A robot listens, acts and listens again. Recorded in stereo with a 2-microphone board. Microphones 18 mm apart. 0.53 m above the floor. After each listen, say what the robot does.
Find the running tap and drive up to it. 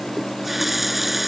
Turn 30° right.
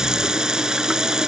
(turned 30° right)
Turn 135° right.
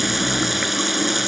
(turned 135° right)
Drive 1.0 m forward.
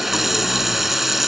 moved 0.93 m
Turn 10° right.
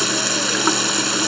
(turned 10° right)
Drive 1.0 m forward.
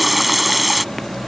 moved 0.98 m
Drive 1.0 m forward.
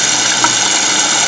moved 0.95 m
Drive 1.0 m forward.
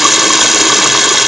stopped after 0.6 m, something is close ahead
Turn 10° right.
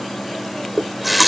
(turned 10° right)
Arrived at the running tap, straight ahead.